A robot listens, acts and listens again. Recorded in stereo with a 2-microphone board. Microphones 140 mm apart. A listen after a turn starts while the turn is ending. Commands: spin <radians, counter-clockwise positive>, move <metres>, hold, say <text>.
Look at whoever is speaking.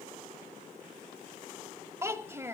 spin -0.26
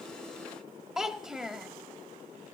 say Found it: a child speaking, straight ahead, 1 to 2 m away.